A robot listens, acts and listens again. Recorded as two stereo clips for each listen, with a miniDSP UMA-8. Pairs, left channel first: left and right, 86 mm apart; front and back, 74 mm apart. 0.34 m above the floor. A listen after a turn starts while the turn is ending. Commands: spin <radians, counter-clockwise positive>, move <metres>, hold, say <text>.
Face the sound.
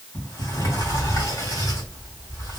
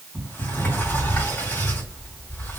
spin 0.87
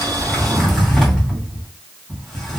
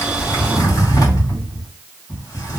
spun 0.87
say Found it: a sliding door, straight ahead.